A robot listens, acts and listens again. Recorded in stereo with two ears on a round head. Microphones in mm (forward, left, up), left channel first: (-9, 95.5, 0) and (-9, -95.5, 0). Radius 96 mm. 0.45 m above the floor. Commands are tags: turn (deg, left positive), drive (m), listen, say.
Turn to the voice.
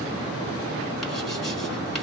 <listen/>
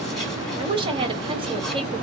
<turn deg="-25"/>
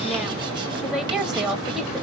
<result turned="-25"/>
<say>Found it: a woman speaking, straight ahead, 1 to 2 m away.</say>